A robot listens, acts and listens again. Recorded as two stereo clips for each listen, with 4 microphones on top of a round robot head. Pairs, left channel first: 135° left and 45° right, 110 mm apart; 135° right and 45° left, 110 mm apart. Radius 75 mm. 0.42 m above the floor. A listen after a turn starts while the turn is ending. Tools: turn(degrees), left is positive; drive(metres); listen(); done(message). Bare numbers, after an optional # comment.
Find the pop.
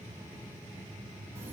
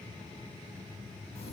listen()
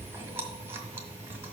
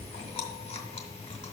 listen()
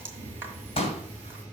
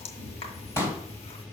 # The pop: 160° left.
turn(160)
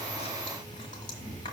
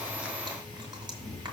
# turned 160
done("I heard a pop from this way, but can't make it out now.")